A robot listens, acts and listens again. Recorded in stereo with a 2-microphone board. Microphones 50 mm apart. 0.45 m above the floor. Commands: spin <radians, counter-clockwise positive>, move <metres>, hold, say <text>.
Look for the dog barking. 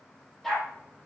spin 0.52
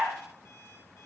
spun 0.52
spin -0.44
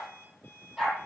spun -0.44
say Facing the dog barking.